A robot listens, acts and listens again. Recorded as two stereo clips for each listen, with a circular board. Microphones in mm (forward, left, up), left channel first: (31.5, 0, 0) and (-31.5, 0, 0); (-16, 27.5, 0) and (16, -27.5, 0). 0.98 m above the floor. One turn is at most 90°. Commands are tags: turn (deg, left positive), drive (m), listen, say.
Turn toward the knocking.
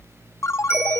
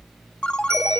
<listen/>
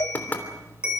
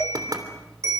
<turn deg="-65"/>
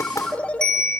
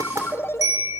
<listen/>
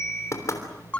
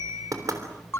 <turn deg="-35"/>
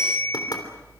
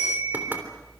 <say>Found it: knocking, straight ahead.</say>